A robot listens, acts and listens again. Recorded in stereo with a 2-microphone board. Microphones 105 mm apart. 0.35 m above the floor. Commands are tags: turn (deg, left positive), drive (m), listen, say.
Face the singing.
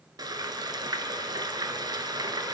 <listen/>
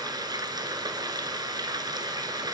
<listen/>
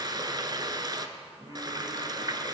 <turn deg="-40"/>
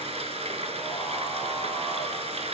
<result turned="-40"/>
<listen/>
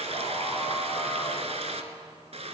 <listen/>
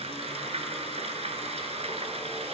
<say>I heard singing, but can't make it out now. It was about straight ahead or 100° right.</say>